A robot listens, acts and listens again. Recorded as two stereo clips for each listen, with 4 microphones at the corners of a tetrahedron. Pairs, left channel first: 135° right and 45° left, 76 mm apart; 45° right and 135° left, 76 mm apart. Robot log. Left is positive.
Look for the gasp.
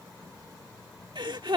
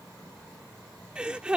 note: The gasp: 60° left.
cmd yaw +60
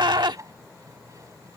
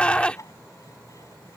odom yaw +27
note: The gasp is now 30° left.
cmd yaw +30
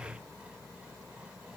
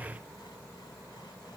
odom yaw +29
end: I heard a gasp from this way, but can't make it out now.